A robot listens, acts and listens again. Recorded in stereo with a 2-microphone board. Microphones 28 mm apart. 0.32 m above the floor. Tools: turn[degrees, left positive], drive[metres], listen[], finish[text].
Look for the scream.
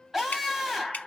Action: turn[-30]
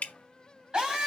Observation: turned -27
Thought: So it is at 145° right.
Action: turn[-145]
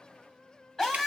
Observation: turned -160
Thought: The scream is now 10° left.
Action: turn[10]
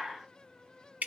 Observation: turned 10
Action: finish[Found it: a scream, straight ahead, 2 to 4 m away.]